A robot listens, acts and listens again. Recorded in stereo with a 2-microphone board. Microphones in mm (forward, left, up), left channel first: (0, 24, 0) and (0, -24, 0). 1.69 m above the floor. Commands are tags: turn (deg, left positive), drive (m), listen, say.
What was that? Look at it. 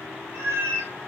<turn deg="-60"/>
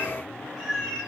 <say>Found it: a cat meowing, straight ahead, 1 to 2 m away.</say>